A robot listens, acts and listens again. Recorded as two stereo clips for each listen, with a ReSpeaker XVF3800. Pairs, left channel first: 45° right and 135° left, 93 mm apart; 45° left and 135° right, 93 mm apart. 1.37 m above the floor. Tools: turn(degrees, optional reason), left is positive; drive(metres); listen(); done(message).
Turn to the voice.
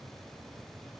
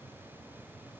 listen()
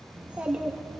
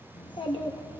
turn(degrees=60, reason="The child speaking: 60° left.")
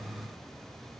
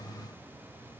listen()
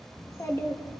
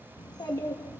turn(degrees=10, reason="The child speaking is now 10° left.")
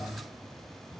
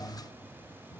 listen()
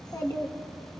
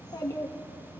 done("Facing the child speaking.")